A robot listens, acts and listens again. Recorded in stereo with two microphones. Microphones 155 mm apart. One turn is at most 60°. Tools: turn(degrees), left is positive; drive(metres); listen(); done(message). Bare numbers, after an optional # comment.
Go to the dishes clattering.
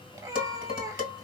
turn(60)
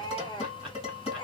# So it is at 40° left.
turn(40)
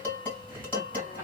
# The dishes clattering is now 10° left.
turn(10)
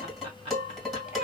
drive(1.0)
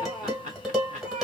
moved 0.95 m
drive(1.0)
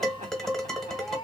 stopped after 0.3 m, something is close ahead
done("I am next to the dishes clattering.")